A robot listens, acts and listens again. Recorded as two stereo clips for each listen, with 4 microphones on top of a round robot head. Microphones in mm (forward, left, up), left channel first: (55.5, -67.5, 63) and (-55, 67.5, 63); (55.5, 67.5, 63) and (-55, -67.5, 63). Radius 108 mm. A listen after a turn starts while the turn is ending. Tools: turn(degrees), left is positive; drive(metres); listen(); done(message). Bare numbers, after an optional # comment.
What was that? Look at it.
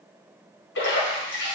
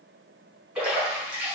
# The splash: 45° right.
turn(-45)
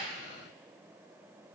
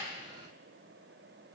done("I heard a splash from this way, but can't make it out now.")